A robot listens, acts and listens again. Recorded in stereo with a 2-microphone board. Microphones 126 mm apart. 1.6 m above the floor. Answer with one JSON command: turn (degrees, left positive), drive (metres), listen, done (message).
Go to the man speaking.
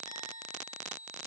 {"listen": true}
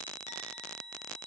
{"listen": true}
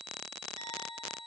{"done": "I can't make out a man speaking."}